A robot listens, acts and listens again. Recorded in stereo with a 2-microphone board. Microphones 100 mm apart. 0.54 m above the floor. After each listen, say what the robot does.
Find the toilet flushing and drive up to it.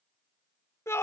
Keep listening.
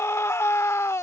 Keep listening.
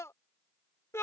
I can't make out a toilet flushing to turn to.